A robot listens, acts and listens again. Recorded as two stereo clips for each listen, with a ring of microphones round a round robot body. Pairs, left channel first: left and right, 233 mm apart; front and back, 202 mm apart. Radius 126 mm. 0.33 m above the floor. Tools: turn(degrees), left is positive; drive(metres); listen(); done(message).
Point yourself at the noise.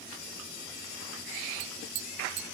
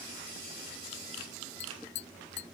turn(degrees=-45)
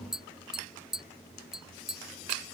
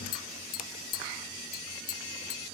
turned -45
done("Found it: tapping, straight ahead.")